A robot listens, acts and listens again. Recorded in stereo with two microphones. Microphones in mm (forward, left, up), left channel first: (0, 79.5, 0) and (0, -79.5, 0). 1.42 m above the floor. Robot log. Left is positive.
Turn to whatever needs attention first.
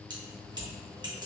cmd idle
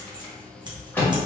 cmd idle
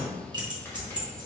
end: I can't make out anything urgent to turn to.